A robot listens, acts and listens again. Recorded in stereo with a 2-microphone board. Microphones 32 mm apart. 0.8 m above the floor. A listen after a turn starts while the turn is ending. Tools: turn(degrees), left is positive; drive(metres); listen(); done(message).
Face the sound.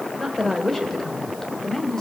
turn(degrees=20)
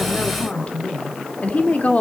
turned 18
turn(degrees=130)
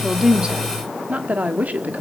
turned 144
turn(degrees=-55)
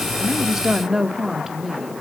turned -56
turn(degrees=-10)
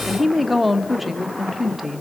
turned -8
done("Facing the woman speaking, 1 to 2 m away.")